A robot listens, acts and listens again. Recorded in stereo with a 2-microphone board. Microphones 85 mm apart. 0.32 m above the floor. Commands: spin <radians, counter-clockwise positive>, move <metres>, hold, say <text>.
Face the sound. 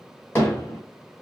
spin 0.44
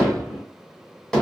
say Found it: hammering, straight ahead, 1 to 2 m away.